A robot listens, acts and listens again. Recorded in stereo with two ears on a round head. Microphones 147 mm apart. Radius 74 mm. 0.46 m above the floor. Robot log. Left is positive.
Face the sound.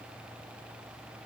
cmd idle
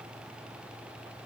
cmd idle
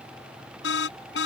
cmd yaw +90
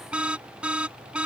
note: So it is at 10° right.
cmd yaw -10
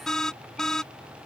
end: Found it: an alarm, straight ahead.